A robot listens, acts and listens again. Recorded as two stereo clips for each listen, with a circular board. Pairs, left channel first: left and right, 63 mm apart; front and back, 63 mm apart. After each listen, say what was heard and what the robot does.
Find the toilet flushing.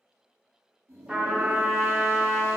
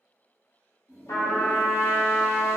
The toilet flushing: 45° right. Turn 45° right.
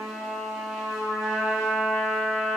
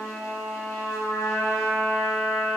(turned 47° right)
Keep listening.
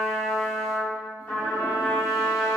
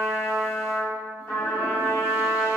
Keep listening.
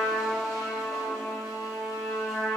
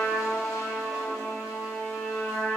Facing where the toilet flushing came from. I can't hear it now.